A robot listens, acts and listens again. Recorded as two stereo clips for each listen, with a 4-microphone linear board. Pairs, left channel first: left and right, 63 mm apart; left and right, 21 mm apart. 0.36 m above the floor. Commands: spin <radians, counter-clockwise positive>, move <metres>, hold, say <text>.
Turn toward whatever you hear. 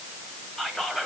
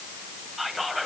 spin 0.52
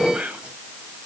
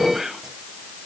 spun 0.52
spin -0.44
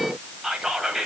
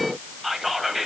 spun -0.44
say Found it: whispering, straight ahead.